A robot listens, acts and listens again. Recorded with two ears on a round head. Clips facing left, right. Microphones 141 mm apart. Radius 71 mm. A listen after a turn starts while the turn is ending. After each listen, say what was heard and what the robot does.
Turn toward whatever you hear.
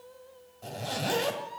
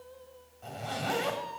The zipper: about 40° left or 140° left. Turn 40° left.
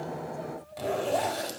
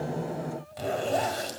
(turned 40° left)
Facing the zipper.